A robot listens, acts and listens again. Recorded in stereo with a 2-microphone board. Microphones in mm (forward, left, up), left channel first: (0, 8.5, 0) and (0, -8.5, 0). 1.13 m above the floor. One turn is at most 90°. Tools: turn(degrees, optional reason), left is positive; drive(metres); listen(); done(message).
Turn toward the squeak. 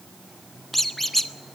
turn(degrees=30)
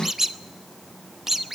turn(degrees=-25, reason="So it is at 25° right.")
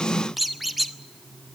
turn(degrees=-10, reason="The squeak is now 10° right.")
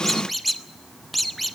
done("Found it: a squeak, straight ahead, under 1 m away.")